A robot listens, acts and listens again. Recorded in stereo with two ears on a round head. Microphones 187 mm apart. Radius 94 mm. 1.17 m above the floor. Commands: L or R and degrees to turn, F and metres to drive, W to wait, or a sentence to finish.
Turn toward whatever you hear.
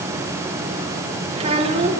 R30
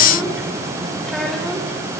W
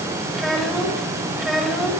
Facing the child speaking.